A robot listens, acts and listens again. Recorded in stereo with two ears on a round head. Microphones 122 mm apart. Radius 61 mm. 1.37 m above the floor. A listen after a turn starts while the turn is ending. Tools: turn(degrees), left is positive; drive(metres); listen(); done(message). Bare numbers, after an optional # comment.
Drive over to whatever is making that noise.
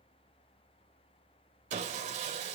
# The sawing: about 50° right or 130° right.
turn(-50)
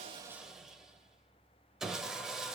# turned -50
drive(1.0)
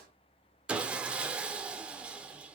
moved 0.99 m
# The sawing is now 10° right.
turn(-10)
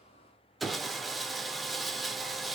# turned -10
drive(1.0)
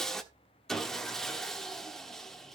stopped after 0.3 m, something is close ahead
done("Arrived at the sawing, straight ahead.")